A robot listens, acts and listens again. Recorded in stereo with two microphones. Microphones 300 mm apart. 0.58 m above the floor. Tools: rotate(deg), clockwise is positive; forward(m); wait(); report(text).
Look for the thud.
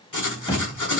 rotate(-30)
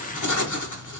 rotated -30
wait()
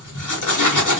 report("I heard a thud, but can't make it out now. It was about 15° right or 135° left.")